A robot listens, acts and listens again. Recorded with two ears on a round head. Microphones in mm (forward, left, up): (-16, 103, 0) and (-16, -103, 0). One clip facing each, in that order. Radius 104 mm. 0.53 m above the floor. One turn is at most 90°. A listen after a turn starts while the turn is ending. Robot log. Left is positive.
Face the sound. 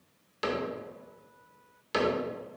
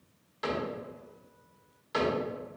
note: The cupboard door: about 40° left or 140° left.
cmd yaw +40
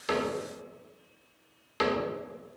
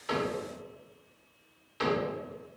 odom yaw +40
note: So it is at 90° left.
cmd yaw +90
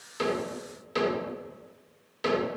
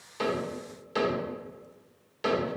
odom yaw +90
end: Found it: a cupboard door, straight ahead.